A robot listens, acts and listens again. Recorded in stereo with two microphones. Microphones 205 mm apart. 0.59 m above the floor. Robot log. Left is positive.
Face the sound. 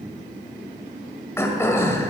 cmd yaw +30
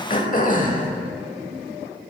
note: So it is at 135° left.
cmd yaw +135
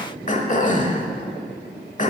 note: The throat clearing is now 40° left.
cmd yaw +40
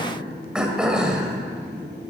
end: Facing the throat clearing.